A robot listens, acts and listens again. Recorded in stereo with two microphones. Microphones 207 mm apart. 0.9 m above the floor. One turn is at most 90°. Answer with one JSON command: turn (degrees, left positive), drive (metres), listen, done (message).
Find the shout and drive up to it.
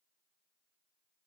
{"listen": true}
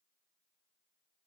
{"listen": true}
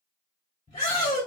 {"turn": 20}
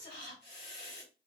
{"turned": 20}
{"turn": 90}
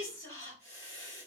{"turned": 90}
{"turn": 35}
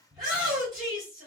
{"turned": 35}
{"drive": 1.0}
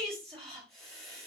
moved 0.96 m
{"drive": 1.0}
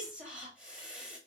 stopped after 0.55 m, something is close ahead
{"done": "Arrived at the shout, straight ahead."}